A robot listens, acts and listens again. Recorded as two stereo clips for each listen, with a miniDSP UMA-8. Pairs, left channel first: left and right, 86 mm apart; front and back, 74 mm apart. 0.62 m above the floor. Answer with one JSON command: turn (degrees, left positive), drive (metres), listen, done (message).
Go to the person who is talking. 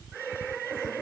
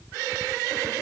{"listen": true}
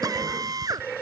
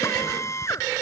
{"listen": true}
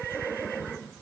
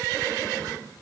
{"done": "I can't make out anyone speaking to turn to."}